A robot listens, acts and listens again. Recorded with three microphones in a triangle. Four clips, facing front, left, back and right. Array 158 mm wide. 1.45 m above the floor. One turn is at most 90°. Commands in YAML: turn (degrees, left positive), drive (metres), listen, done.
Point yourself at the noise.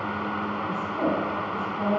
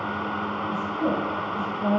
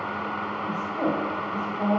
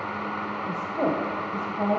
turn: -90
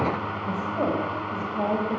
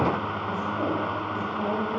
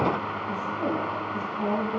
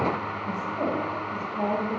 turn: -15
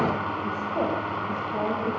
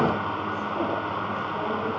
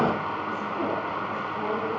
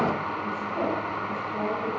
listen: true
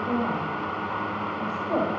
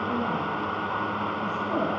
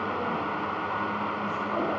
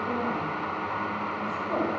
done: "Facing the woman speaking."